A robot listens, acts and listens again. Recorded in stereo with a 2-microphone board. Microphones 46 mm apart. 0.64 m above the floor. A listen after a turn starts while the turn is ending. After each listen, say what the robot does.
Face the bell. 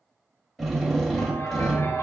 Turn 65° left.
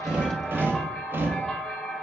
Turn 15° left.
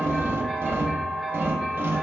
Found it: a bell, straight ahead.